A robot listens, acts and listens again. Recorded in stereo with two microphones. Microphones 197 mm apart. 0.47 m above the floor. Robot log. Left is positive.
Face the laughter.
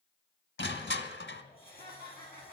note: The laughter: about 50° right or 130° right.
cmd yaw -50
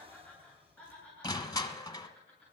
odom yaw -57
end: Found it: laughter, straight ahead.